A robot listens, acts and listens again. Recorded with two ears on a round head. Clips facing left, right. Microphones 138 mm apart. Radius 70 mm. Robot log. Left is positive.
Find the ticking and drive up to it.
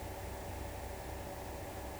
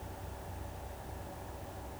cmd idle
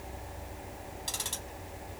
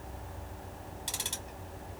note: The ticking: about 25° right or 155° right.
cmd yaw -25
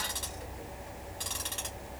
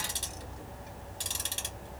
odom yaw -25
note: So it is at 135° right.
cmd yaw -135
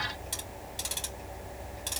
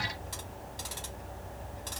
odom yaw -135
note: The ticking is now 25° left.
cmd yaw +25
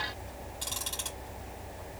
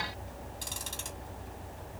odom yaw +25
cmd fwd 1.0
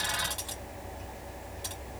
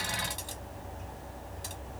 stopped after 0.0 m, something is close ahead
end: Blocked. The ticking is further on, straight ahead.